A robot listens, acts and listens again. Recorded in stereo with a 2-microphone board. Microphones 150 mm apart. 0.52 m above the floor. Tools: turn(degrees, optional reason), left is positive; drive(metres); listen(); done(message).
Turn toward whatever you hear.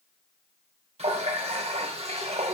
turn(degrees=-45, reason="The running tap: about 45° right or 135° right.")
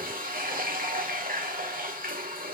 turn(degrees=-90, reason="So it is at 90° right.")
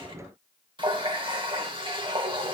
turn(degrees=-35, reason="The running tap is now 35° right.")
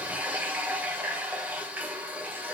turn(degrees=-10, reason="The running tap is now 10° right.")
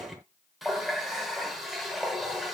done("Facing the running tap, 1 to 2 m away.")